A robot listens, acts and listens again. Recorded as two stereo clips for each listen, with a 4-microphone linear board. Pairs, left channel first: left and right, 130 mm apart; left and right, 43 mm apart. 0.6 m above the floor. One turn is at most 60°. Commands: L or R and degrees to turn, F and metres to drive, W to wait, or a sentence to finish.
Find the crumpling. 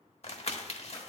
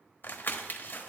L55
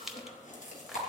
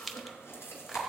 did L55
Found it: crumpling, straight ahead.